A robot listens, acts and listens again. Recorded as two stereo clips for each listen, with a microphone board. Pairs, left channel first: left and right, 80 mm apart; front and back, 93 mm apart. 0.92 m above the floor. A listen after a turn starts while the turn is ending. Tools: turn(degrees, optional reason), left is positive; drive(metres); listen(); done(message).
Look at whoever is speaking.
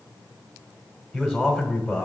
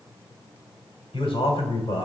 done("Found it: a man speaking, straight ahead.")